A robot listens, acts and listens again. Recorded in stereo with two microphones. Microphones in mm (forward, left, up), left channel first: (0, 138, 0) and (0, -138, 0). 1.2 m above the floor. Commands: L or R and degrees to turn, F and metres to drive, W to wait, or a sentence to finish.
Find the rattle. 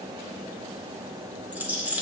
R30
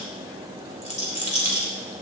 L25
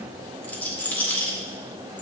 Facing the rattle, 2 to 4 m away.